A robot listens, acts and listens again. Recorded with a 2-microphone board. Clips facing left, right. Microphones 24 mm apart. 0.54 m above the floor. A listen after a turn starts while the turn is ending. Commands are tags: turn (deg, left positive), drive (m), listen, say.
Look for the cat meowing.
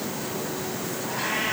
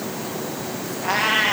<turn deg="-60"/>
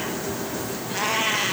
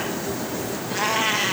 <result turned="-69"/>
<say>Facing the cat meowing, 2 to 4 m away.</say>